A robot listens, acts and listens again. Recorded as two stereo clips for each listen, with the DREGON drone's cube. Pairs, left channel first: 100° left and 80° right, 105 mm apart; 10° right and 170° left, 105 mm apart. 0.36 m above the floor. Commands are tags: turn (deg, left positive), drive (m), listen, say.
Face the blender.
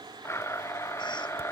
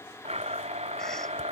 <turn deg="165"/>
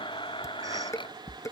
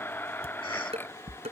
<turn deg="60"/>
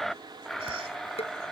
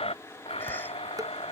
<turn deg="15"/>
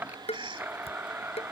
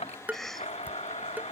<say>Found it: a blender, straight ahead.</say>